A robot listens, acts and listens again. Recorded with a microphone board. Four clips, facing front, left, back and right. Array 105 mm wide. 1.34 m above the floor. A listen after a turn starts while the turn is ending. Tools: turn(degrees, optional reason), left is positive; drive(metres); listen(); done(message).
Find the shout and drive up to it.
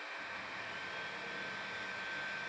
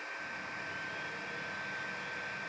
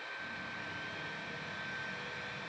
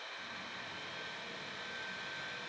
listen()
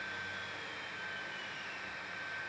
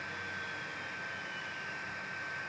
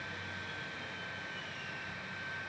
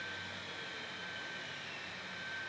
listen()
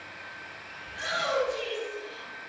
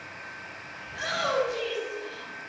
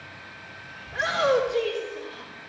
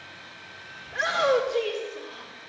turn(degrees=-125, reason="The shout: 125° right.")
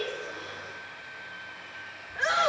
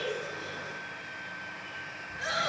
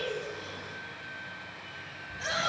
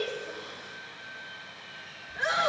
turn(degrees=-20, reason="The shout is now 20° right.")
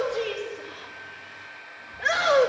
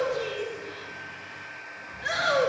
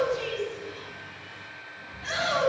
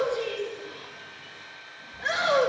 drive(metres=1.0)
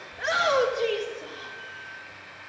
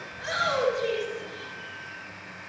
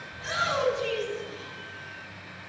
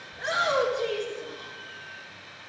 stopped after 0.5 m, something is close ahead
turn(degrees=-10, reason="The shout is now 10° right.")
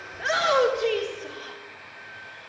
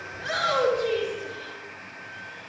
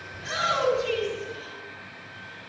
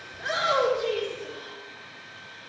done("Blocked. The shout is further on, straight ahead.")